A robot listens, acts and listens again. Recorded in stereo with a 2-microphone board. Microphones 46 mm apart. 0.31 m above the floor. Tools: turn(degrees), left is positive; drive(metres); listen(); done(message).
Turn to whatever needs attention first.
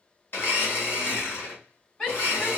turn(degrees=20)
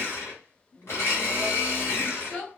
turn(degrees=135)
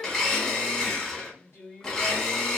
turn(degrees=50)
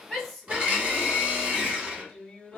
done("Facing the shout.")